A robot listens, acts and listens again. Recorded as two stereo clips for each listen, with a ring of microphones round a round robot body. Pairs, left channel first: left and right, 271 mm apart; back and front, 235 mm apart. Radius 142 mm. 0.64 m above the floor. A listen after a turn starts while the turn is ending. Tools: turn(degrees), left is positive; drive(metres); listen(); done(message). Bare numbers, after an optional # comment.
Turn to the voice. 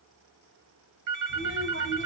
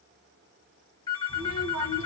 # The child speaking: 40° right.
turn(-40)
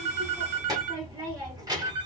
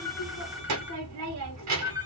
# The child speaking is now 15° right.
turn(-15)
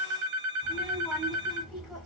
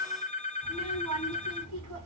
done("Found it: a child speaking, straight ahead.")